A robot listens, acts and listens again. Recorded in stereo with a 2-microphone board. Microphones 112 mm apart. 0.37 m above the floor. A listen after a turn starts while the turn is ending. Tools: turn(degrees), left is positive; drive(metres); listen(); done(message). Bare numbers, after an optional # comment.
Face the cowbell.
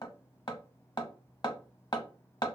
listen()
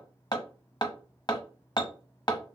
listen()
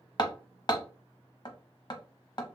done("I can't make out a cowbell, only hammering.")